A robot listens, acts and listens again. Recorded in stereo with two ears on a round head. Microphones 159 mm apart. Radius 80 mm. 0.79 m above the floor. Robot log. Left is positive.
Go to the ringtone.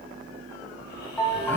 cmd yaw +30
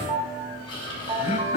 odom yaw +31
note: So it is at 30° right.
cmd yaw -30
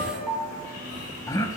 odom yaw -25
cmd fwd 1.0
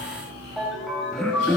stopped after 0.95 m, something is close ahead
end: Something is in my way. I am facing the ringtone but have not reached it.